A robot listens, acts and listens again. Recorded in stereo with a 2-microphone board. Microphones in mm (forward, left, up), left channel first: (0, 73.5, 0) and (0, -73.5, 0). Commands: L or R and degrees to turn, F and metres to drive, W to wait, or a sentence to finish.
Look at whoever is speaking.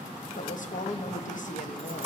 L60
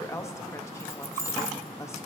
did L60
L25
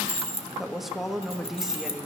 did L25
Found it: a woman speaking, straight ahead, 1 to 2 m away.